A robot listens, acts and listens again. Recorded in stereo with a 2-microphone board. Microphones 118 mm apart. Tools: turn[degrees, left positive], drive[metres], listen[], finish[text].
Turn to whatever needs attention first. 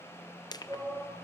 Action: turn[-30]
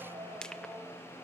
Thought: So it is at 135° right.
Action: turn[-135]
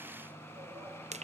Action: listen[]
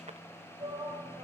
Thought: The shout is now 40° right.
Action: turn[-40]
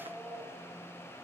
Action: finish[Facing the shout.]